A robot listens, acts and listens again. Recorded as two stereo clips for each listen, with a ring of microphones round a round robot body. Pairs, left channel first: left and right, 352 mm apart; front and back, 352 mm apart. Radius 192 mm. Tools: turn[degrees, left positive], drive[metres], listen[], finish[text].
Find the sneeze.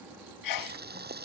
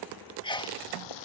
Thought: The sneeze: 75° left.
Action: turn[75]
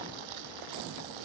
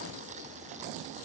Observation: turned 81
Action: finish[I heard a sneeze from this way, but can't make it out now.]